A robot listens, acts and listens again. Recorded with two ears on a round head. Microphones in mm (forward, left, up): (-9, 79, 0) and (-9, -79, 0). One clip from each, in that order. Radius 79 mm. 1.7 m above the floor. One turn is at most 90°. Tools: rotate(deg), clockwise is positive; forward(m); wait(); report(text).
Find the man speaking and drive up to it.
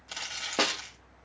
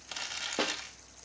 wait()
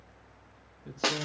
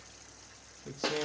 rotate(45)
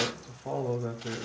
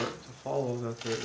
rotate(90)
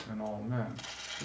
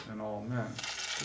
rotate(10)
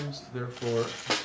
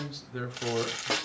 forward(1.0)
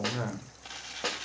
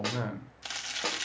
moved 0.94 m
forward(1.0)
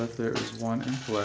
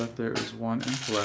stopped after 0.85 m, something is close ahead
report("Arrived at the man speaking, straight ahead.")